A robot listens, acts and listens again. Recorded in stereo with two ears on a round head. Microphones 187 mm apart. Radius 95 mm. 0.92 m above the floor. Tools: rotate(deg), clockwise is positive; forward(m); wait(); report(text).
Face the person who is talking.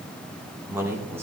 rotate(30)
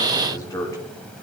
rotate(-15)
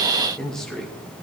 report("Facing the man speaking.")